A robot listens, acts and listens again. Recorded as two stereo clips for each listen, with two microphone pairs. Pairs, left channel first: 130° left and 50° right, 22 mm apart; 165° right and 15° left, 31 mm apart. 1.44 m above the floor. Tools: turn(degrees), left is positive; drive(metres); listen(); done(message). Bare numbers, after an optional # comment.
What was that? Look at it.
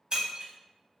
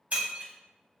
# The breaking glass: 15° right.
turn(-15)
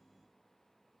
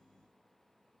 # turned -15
done("I heard breaking glass from this way, but can't make it out now.")